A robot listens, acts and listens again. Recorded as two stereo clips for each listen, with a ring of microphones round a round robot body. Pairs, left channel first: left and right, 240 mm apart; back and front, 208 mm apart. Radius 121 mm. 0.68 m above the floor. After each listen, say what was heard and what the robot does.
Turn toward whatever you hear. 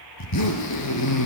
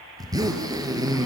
The zipper: 75° left. Turn 75° left.
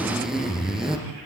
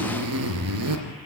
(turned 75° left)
Facing the zipper, 2 to 4 m away.